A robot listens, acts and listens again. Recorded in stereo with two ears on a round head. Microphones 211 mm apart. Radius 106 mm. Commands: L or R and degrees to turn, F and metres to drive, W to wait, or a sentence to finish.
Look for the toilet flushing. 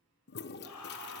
L45
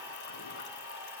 W
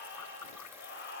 L85
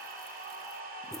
W
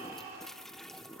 Found it: a toilet flushing, straight ahead, 1 to 2 m away.